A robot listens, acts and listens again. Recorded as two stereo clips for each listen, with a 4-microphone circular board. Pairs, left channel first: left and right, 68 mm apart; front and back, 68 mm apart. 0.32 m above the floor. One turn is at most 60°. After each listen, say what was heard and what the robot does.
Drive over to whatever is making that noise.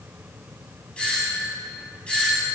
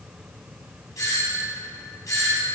The doorbell: 20° left. Turn 20° left.
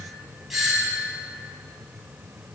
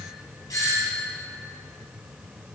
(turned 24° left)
Drive 1.0 m forward.
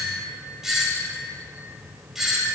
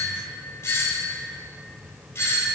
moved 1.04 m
The doorbell is now 10° right. Turn 10° right.
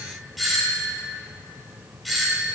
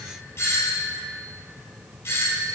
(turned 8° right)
Drive 1.0 m forward.
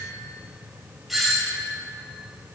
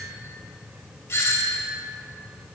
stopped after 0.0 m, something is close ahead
Arrived at the doorbell, straight ahead.